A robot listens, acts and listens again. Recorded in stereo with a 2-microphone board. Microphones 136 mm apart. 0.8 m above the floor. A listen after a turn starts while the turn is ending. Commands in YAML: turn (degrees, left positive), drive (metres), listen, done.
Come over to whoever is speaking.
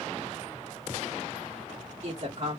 turn: -60
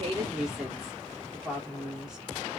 drive: 1.0
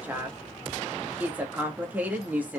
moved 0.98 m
turn: -15
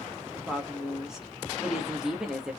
drive: 1.0
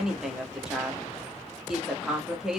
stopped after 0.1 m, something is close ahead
done: "Arrived at the woman speaking, straight ahead."